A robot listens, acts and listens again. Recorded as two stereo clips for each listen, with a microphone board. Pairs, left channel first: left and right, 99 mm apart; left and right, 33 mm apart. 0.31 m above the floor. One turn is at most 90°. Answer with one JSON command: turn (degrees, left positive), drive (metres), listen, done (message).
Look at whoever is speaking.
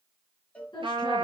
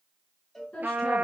{"turn": 55}
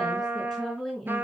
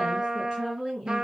{"done": "Facing the woman speaking, 2 to 4 m away."}